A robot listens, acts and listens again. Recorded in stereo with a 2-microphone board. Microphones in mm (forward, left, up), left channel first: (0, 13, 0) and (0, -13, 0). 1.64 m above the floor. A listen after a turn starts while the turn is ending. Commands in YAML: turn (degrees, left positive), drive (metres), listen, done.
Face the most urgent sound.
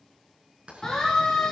turn: 25
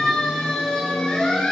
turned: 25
turn: 130
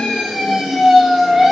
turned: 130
done: "Found it: a siren, straight ahead."